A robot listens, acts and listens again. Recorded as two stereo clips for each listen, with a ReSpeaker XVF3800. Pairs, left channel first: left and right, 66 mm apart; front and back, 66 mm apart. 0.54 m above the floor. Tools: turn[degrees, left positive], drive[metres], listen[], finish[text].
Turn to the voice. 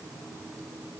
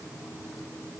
Action: listen[]
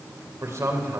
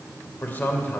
Thought: The man speaking: 60° right.
Action: turn[-60]
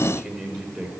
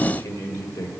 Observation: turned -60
Thought: The man speaking is now 10° right.
Action: turn[-10]
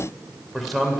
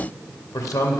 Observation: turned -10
Action: finish[Found it: a man speaking, straight ahead.]